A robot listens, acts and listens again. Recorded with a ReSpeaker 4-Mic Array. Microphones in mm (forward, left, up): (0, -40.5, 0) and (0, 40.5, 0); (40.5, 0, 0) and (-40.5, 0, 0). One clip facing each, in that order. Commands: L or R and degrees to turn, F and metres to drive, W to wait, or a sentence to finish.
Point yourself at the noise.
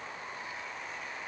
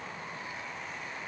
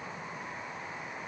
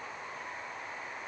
W
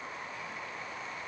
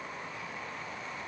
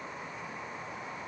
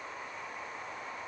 W
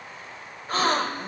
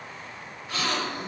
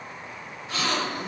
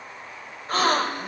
R140
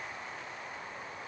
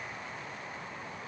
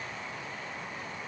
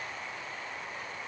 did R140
Facing where the gasp came from. I can't hear it now.